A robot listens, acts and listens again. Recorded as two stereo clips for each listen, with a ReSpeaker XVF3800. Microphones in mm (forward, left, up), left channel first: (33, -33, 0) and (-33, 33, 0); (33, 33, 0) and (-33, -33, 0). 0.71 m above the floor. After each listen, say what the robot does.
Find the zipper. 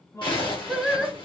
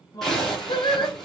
Turn 40° right.
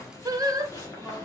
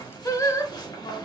Facing the zipper.